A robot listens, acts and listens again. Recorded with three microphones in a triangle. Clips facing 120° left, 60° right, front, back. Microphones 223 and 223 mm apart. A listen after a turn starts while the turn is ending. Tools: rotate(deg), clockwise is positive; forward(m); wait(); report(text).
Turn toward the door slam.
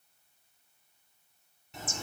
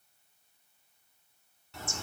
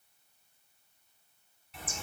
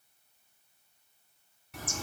wait()
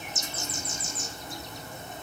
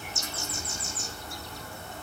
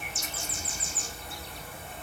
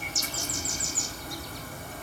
wait()
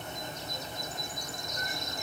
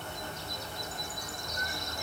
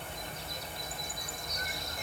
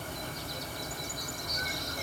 report("I can't make out a door slam, only a bird.")